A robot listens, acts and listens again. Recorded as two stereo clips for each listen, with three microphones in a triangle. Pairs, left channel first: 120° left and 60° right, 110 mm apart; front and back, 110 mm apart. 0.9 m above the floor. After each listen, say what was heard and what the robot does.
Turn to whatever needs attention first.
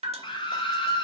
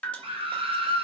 The scream: 155° left. Turn 155° left.
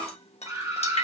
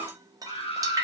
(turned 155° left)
Facing the scream, 1 to 2 m away.